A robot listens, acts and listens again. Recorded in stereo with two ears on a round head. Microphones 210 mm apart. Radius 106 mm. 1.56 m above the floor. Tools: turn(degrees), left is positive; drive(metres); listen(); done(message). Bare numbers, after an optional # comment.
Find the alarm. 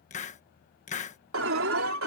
# The alarm: about 60° right or 120° right.
turn(-60)
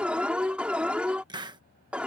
done("Found it: an alarm, straight ahead.")